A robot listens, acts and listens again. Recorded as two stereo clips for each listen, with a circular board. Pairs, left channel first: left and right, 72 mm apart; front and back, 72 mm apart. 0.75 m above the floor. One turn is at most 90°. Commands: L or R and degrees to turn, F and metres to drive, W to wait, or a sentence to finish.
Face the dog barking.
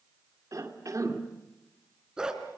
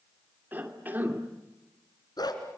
R10
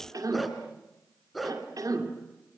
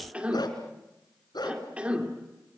Found it: a dog barking, straight ahead, 2 to 4 m away.